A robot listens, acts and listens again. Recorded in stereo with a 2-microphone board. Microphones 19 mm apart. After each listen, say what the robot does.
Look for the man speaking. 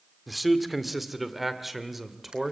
Turn 30° right.
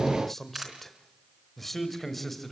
Facing the man speaking, 2 to 4 m away.